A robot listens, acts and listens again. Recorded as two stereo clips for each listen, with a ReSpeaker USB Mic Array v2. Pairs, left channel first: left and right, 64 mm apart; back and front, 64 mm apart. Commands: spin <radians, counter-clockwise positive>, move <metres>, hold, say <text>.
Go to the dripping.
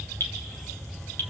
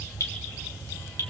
spin 2.44
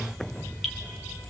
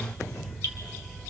hold
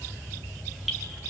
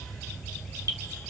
move 1.0
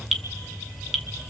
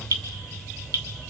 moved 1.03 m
move 1.0
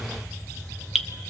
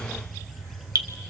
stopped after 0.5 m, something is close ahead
say I am next to the dripping.